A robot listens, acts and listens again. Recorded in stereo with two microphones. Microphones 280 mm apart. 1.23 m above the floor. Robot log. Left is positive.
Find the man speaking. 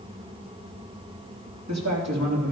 note: The man speaking: about 70° right or 110° right.
cmd yaw -70
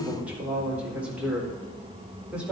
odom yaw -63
end: Facing the man speaking, over 4 m away.